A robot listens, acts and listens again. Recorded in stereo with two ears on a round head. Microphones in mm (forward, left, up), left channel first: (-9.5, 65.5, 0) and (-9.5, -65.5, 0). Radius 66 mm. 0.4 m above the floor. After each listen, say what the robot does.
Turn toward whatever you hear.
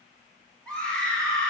Turn 30° left.
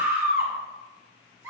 Turn 20° right.
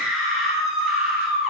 Facing the scream.